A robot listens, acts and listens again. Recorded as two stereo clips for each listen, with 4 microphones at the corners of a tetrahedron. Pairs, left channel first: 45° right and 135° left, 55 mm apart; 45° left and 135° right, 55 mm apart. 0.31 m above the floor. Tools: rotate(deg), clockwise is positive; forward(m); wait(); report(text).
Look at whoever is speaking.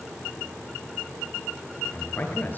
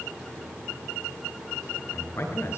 rotate(-10)
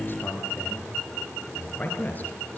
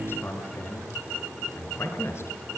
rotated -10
rotate(-10)
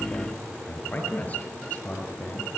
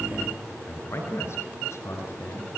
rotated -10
rotate(-15)
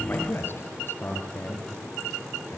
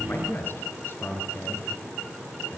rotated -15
report("Facing the man speaking, over 4 m away.")